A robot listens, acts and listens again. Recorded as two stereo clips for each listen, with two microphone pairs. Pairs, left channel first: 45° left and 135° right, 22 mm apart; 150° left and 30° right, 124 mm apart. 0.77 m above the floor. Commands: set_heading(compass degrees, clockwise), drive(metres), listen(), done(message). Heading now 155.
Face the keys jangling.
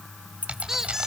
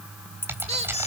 set_heading(290)
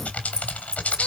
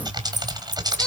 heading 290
done("Found it: keys jangling, straight ahead.")